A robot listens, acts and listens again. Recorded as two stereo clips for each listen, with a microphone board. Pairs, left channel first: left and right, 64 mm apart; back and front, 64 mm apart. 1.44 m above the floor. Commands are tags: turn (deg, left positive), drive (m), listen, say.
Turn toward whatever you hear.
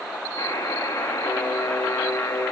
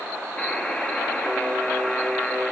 <turn deg="105"/>
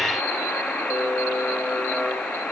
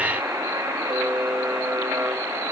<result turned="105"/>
<turn deg="20"/>
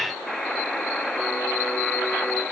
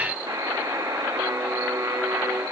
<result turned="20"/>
<say>Facing the buzzer, 1 to 2 m away.</say>